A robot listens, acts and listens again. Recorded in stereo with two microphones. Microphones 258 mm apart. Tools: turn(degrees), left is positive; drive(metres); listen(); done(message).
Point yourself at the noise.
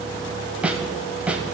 turn(degrees=-30)
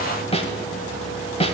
turn(degrees=25)
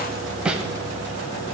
done("Facing the snare drum.")